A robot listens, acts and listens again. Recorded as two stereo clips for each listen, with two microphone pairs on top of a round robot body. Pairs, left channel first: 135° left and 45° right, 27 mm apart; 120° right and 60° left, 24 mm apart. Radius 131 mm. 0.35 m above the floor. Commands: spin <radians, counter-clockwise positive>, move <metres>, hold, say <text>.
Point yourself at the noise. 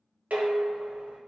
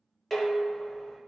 spin -0.70
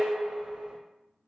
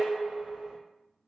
spin 0.26
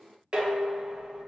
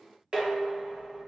say Found it: dishes clattering, straight ahead.